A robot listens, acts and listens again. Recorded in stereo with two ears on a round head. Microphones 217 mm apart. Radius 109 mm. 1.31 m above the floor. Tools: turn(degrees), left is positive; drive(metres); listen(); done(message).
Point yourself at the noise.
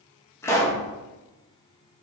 turn(degrees=30)
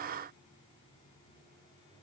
listen()
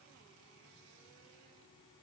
done("I heard a pop, but can't make it out now. It was about 20° right or 140° left.")